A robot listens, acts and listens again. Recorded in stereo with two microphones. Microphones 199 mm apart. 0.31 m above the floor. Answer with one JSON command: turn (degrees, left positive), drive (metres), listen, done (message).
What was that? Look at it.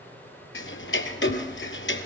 {"turn": 90}
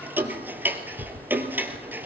{"turn": -10}
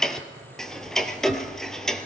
{"done": "Found it: ticking, straight ahead, 1 to 2 m away."}